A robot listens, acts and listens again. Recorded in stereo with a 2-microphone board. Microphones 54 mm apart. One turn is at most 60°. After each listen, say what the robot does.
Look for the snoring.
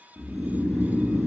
Turn 30° right.
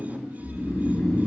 Facing the snoring.